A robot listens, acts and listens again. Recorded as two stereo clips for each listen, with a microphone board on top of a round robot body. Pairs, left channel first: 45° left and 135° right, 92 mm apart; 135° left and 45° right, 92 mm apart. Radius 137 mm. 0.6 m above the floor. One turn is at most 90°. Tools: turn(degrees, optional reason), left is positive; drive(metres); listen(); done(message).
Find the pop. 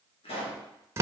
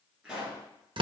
turn(degrees=35, reason="The pop: 35° left.")
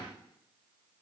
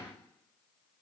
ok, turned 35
done("I heard a pop from this way, but can't make it out now.")